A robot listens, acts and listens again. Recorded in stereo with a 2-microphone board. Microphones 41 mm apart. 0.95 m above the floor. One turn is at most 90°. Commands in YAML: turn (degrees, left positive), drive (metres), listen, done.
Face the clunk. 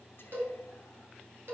listen: true
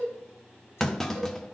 turn: 30
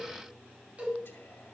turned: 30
listen: true
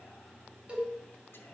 done: "I heard a clunk, but can't make it out now. It was about 20° right or 140° left."